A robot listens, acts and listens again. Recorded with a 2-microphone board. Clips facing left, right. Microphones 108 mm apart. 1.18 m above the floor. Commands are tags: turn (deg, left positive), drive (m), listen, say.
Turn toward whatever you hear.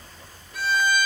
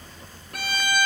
<turn deg="-65"/>
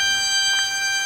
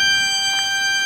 <turn deg="-45"/>
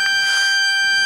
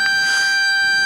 <say>Found it: a violin, straight ahead.</say>